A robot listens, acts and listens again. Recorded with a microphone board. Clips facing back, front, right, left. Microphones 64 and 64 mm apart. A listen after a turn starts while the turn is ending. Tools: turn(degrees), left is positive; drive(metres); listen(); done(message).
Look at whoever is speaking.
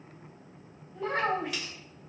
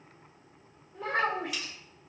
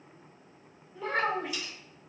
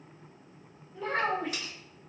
done("Facing the child speaking, 1 to 2 m away.")